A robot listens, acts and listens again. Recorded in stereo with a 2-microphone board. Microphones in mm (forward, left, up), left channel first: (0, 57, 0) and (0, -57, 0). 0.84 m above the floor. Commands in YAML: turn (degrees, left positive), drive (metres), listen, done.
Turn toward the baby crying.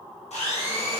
listen: true
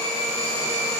listen: true
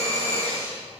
done: "I can't make out a baby crying to turn to."